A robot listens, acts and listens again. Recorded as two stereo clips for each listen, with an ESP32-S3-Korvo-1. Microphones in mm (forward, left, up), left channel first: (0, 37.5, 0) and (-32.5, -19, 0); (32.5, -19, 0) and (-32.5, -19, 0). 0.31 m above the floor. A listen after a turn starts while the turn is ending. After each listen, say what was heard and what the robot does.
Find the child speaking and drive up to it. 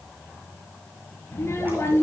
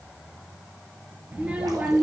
The child speaking: 110° left. Turn 110° left.
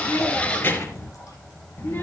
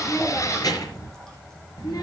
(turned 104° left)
Drive 1.0 m forward.
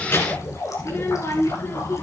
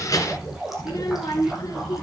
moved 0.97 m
The child speaking is now 15° left. Turn 15° left.
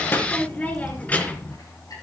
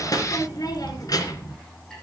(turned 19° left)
Drive 1.0 m forward.
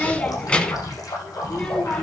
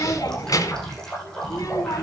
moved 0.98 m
The child speaking is now 10° right. Turn 10° right.
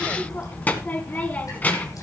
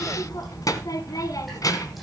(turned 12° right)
Drive 1.0 m forward.
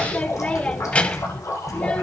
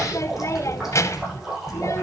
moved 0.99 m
Drive 1.0 m forward.
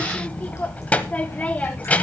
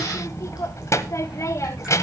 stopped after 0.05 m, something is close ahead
I am next to the child speaking.